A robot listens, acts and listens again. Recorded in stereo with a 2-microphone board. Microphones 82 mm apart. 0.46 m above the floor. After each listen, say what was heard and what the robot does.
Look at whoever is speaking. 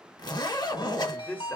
Turn 30° left.
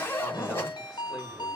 Keep listening.
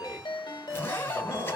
Keep listening.
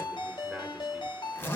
I heard a man speaking, but can't make it out now. It was about 15° right or 135° left.